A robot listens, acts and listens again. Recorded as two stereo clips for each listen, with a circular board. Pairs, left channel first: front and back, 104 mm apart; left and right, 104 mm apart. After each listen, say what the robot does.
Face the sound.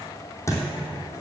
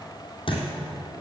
Turn 60° left.
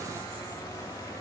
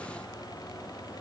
Facing where the thud came from. I can't hear it now.